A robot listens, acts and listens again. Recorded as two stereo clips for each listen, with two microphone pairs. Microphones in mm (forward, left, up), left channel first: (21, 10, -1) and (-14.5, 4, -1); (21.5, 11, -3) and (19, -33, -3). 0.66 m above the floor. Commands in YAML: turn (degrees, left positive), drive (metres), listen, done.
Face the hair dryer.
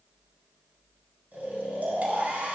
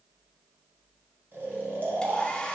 turn: 160
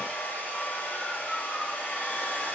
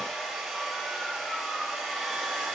done: "Facing the hair dryer, 1 to 2 m away."